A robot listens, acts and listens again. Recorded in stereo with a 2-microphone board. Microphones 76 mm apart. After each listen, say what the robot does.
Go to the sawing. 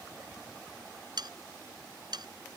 Turn 65° right.
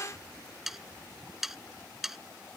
Drive 1.0 m forward.
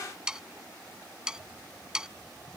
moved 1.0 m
Turn 10° right.
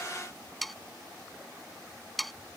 Drive 1.0 m forward.
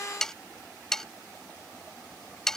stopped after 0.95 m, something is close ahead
I am next to the sawing.